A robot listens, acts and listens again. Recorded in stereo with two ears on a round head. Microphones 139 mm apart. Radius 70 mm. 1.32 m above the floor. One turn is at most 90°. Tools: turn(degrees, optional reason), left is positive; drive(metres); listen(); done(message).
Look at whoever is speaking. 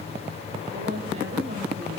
turn(degrees=-45, reason="The woman speaking: about 45° right or 135° right.")
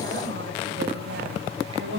turn(degrees=-90, reason="So it is at 90° right.")
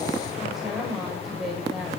done("Facing the woman speaking.")